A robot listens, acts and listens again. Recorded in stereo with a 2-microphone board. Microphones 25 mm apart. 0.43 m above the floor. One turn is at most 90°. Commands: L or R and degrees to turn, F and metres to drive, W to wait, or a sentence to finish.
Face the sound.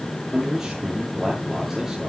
R15
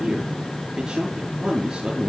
R90
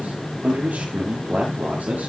R90
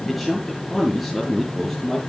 Facing the man speaking, over 4 m away.